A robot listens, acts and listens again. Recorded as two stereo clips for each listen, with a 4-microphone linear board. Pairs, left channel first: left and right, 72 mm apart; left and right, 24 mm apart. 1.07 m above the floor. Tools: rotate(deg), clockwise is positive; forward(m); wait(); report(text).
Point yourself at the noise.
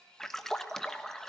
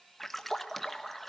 rotate(-30)
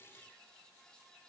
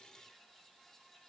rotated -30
wait()
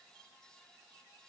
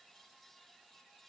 report("I heard a splash, but can't make it out now. It was about 25° right or 145° left.")